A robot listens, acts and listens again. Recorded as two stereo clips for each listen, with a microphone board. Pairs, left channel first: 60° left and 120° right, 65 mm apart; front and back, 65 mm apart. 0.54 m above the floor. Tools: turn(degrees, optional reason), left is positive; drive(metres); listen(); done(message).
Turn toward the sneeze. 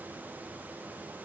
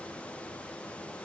listen()
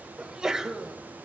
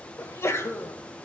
turn(degrees=-40, reason="The sneeze: 40° right.")
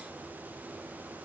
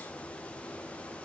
done("Facing where the sneeze came from. I can't hear it now.")